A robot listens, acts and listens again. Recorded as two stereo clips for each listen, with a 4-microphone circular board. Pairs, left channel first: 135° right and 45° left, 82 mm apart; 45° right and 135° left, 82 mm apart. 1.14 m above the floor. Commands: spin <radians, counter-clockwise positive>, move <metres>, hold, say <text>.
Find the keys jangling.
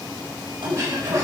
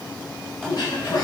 spin 0.61
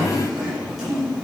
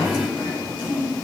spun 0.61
hold
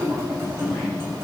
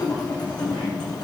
spin -0.26
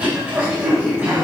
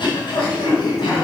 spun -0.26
hold
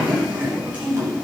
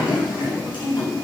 hold
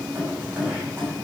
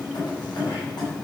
spin -0.26
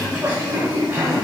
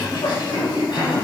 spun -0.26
hold
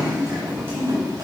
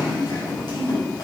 hold
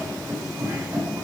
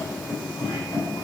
say Facing the keys jangling.